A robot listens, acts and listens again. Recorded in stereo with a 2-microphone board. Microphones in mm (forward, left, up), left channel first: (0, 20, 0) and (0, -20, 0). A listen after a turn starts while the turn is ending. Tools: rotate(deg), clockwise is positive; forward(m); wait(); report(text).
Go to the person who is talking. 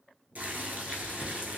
wait()
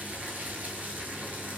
wait()
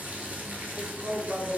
rotate(55)
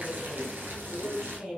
rotate(25)
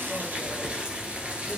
wait()
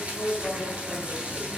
rotate(-20)
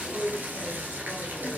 forward(1.0)
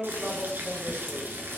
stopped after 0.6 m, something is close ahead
report("Arrived at the woman speaking, straight ahead.")